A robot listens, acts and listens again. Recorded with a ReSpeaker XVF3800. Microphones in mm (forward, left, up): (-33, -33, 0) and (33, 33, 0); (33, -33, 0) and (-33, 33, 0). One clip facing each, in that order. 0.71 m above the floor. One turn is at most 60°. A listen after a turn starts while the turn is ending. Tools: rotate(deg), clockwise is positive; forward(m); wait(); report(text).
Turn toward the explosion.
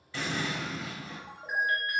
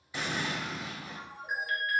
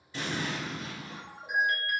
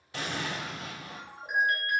rotate(-60)
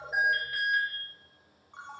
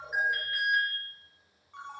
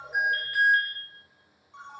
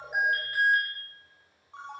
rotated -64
rotate(-60)
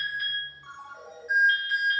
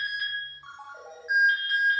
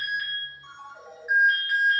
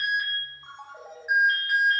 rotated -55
report("I heard an explosion from this way, but can't make it out now.")